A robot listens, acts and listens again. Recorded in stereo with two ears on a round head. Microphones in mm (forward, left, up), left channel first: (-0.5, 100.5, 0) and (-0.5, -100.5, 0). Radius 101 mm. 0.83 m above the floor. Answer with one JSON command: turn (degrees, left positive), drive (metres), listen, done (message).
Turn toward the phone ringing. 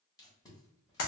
{"listen": true}
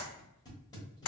{"listen": true}
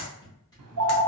{"turn": -90}
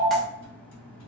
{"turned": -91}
{"done": "Facing the phone ringing."}